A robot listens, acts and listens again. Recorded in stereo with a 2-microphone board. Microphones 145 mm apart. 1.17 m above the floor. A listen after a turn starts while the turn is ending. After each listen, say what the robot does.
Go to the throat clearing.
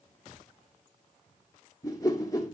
Keep listening.
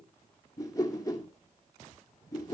Keep listening.
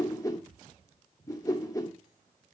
I can't make out throat clearing, only a whoosh.